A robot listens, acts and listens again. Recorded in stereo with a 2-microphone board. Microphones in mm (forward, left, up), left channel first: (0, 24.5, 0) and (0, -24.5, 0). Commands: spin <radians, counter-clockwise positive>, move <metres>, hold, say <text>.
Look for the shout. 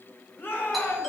spin 0.87
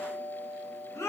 spin 1.48
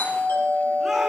hold
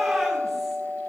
hold
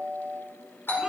say I heard a shout from this way, but can't make it out now.